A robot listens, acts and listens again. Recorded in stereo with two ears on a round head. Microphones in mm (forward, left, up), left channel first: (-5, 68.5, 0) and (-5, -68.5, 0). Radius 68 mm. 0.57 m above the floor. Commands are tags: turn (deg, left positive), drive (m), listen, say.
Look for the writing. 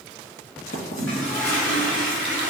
<turn deg="50"/>
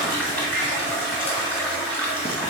<listen/>
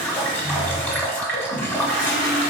<listen/>
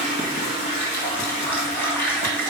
<say>I heard writing, but can't make it out now. It was about straight ahead or 80° left.</say>